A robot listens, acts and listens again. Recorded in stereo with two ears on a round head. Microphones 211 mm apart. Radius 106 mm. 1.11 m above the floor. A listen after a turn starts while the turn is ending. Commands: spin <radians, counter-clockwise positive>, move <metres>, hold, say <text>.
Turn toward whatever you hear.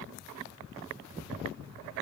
hold
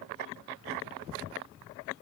hold
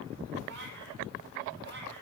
spin -0.96
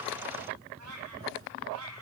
spin -1.31
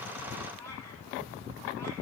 spin 0.17
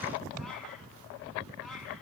say Found it: a cat meowing, straight ahead.